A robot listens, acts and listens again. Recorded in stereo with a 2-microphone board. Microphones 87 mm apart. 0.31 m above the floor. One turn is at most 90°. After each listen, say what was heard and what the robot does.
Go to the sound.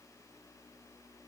Keep listening.
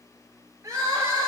The crying: about 35° right or 145° right. Turn 35° right.
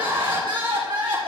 So it is at 105° right. Turn 90° right.
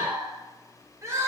The crying is now 35° right. Turn 35° right.
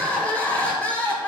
The crying is now 15° left. Turn 15° left.
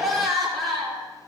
Drive 1.0 m forward.
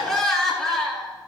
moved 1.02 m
Drive 1.0 m forward.
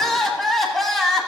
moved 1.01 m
Drive 1.0 m forward.
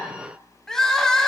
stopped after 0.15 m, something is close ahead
I am next to the crying.